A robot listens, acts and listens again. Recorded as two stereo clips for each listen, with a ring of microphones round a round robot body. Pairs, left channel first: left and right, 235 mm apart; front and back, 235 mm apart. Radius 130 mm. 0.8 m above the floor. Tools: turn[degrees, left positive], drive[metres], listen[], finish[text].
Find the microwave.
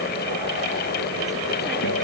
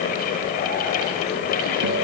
Action: listen[]
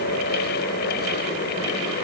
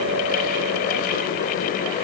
Action: listen[]
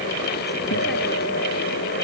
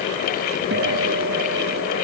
Action: finish[I can't make out a microwave.]